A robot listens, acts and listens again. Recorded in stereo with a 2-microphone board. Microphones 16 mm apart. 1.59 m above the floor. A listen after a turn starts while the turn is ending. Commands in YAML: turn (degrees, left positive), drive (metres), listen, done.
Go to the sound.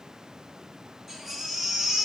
turn: -30
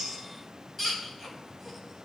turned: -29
turn: 25
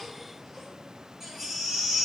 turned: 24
drive: 1.0
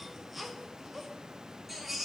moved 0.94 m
drive: 1.0
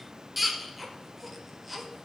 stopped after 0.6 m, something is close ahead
done: "Arrived at the baby crying, straight ahead."